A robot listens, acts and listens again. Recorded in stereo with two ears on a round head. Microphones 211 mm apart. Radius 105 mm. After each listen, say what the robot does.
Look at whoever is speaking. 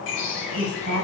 Turn 60° right.
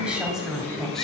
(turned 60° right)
Facing the woman speaking.